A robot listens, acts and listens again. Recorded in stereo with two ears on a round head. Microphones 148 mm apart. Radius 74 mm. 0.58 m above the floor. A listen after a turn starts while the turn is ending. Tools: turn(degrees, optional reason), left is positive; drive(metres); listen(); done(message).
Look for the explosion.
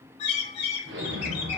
turn(degrees=-70, reason="The explosion: about 70° right or 110° right.")
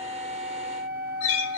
listen()
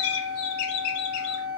done("I heard an explosion, but can't make it out now. It was about straight ahead or 40° right.")